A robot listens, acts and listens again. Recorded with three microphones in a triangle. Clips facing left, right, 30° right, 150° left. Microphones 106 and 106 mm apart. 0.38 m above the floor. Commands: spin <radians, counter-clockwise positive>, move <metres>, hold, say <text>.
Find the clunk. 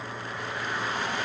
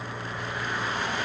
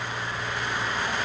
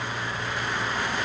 hold
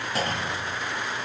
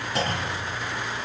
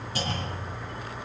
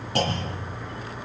spin 3.14
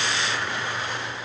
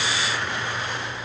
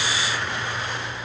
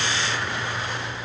say Facing where the clunk came from. I can't hear it now.